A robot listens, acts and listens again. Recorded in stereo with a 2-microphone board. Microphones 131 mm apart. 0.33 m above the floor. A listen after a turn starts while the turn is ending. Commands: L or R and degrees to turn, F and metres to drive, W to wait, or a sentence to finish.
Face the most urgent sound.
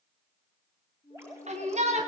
R60
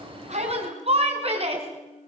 R55
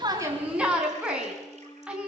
R10
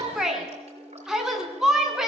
Facing the shout, 2 to 4 m away.